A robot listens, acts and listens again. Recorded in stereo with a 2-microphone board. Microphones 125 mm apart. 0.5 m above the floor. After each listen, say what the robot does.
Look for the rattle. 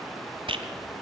Turn 45° right.
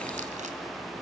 Keep listening.
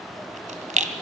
Turn 90° right.
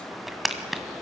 Facing the rattle.